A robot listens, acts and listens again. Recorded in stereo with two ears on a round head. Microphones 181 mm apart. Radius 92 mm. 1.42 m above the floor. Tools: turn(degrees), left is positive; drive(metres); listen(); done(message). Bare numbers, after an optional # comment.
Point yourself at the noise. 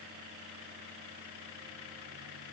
listen()
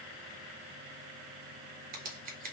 # The scissors: about 40° right or 140° right.
turn(-40)
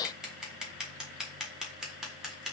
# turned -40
done("Found it: scissors, straight ahead, 1 to 2 m away.")